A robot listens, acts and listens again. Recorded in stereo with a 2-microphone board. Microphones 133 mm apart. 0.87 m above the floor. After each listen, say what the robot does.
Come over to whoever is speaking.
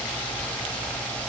Keep listening.
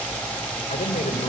Turn 90° left.
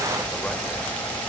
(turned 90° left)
Keep listening.
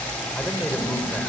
Keep listening.
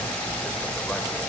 I heard a man speaking from this way, but can't make it out now. I did not reach it.